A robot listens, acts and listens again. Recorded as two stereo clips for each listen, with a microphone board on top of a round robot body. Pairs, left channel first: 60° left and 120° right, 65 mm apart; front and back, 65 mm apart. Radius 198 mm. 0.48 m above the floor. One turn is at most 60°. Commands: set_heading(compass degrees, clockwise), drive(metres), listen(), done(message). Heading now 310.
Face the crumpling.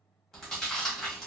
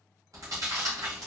listen()
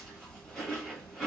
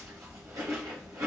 listen()
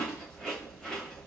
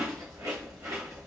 done("I can't make out crumpling, only chewing.")